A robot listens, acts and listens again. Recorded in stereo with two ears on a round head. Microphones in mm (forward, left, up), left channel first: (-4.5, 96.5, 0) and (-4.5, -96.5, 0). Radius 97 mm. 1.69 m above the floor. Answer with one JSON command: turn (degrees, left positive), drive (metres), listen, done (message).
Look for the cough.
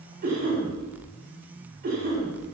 {"turn": -45}
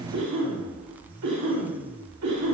{"turn": -90}
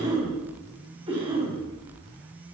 {"turn": -25}
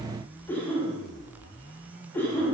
{"turn": 10}
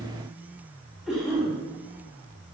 {"done": "Facing the cough."}